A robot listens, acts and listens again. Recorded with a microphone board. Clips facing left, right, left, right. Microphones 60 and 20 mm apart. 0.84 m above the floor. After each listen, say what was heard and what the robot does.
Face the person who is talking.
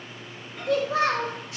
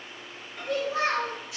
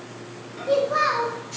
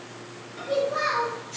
The child speaking: about 70° left or 110° left. Turn 70° left.
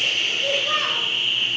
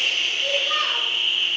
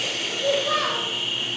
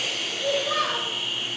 So it is at 25° left. Turn 25° left.
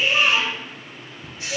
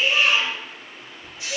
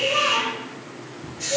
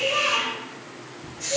Keep listening.
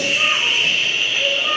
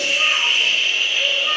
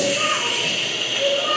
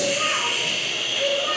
Keep listening.
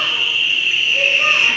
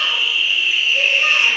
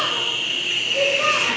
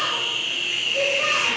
I heard a child speaking from this way, but can't make it out now.